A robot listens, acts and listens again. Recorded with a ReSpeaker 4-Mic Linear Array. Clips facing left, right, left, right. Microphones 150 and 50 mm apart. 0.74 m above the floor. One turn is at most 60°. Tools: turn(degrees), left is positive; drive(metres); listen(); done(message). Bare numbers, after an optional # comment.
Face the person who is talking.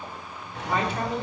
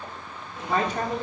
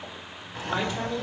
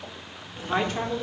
# The woman speaking: about 40° right or 140° right.
turn(-40)
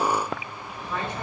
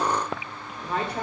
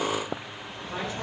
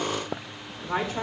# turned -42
# So it is at 105° right.
turn(-60)
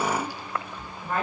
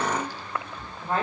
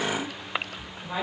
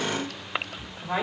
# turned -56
# The woman speaking is now 30° right.
turn(-30)
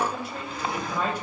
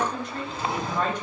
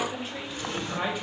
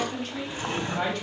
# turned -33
# The woman speaking is now 10° left.
turn(10)
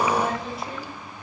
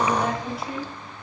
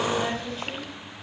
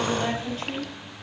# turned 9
done("Facing the woman speaking.")